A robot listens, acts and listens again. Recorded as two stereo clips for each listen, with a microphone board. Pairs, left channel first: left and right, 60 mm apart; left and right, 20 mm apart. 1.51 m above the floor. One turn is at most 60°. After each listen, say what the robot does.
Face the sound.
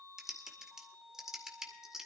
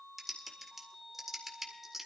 Turn 30° right.
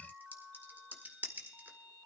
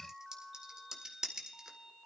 Turn 60° right.
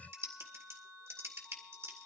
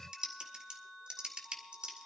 Turn 60° right.
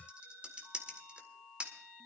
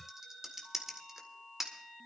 Turn 25° right.
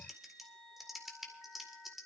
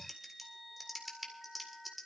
Found it: typing on a keyboard, straight ahead.